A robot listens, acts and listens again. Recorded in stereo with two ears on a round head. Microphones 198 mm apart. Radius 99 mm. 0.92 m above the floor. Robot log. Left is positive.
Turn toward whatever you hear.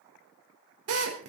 note: The drill: about 75° right or 105° right.
cmd yaw -75
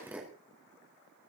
note: So it is at 10° right.
cmd yaw -10
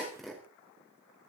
end: Found it: a drill, straight ahead.